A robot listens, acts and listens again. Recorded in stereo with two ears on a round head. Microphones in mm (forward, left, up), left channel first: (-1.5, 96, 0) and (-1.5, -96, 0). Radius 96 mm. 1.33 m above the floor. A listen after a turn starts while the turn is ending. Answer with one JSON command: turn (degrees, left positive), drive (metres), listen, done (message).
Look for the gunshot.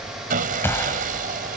{"turn": 30}
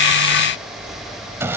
{"listen": true}
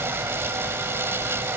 {"done": "I heard a gunshot, but can't make it out now. It was about 20° right or 140° left."}